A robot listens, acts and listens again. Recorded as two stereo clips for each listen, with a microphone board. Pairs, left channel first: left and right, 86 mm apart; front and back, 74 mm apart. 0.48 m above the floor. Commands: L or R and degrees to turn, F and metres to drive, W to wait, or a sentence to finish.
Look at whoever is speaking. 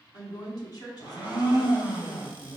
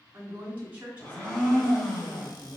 L115
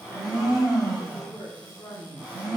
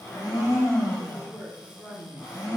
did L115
L30
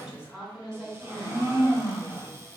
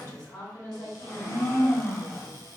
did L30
R15
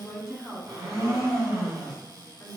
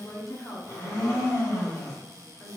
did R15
Facing the woman speaking.